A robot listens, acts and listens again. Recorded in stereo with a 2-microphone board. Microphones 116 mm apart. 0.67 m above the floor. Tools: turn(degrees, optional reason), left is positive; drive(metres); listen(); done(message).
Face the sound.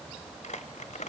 turn(degrees=90)
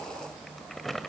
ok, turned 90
done("Found it: crumpling, straight ahead, 1 to 2 m away.")